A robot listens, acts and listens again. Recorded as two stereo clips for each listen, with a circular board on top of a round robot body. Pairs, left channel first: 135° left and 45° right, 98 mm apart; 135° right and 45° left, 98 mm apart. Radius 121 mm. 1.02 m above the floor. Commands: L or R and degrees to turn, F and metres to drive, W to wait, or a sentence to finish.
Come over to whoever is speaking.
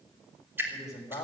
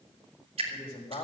R165
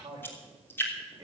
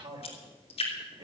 L15
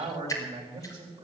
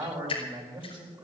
F1.0
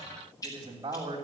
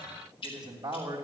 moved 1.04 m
F1.0
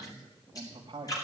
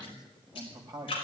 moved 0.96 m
F1.0
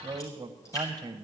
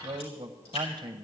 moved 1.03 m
F1.0
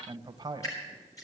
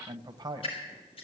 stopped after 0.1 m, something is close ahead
I am next to the man speaking.